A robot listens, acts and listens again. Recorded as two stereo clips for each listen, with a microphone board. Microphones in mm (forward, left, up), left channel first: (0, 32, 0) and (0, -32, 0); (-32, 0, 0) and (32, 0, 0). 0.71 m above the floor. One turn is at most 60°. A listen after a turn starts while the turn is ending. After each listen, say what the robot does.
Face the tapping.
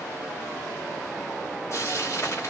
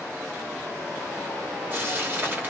Keep listening.
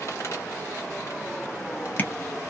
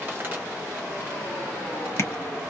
Turn 60° left.
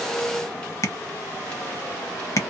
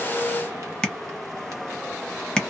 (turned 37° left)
Turn 60° left.
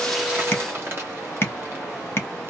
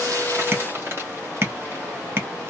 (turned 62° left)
Turn 45° left.
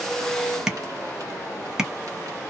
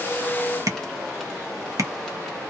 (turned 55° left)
Turn 10° right.
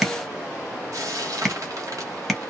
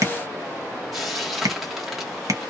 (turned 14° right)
Found it: tapping, straight ahead.